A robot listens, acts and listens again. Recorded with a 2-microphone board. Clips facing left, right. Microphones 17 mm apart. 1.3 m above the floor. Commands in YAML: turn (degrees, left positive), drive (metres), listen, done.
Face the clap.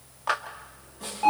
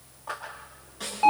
turn: 60
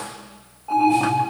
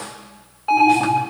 listen: true
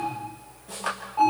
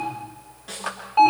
done: "Found it: a clap, straight ahead, 2 to 4 m away."